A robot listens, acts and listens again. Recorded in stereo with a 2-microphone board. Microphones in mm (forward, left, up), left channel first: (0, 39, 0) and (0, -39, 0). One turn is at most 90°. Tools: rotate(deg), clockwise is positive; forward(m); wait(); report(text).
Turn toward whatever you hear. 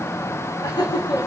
rotate(-90)
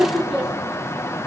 rotate(10)
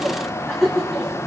report("Found it: laughter, straight ahead.")